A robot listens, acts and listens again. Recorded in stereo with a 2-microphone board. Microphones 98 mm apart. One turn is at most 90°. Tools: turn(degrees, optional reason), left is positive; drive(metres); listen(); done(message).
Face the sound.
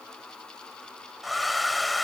turn(degrees=30)
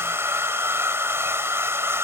turn(degrees=-30, reason="So it is at 30° right.")
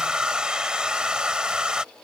turn(degrees=-10, reason="The hair dryer is now 10° right.")
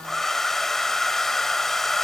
done("Facing the hair dryer.")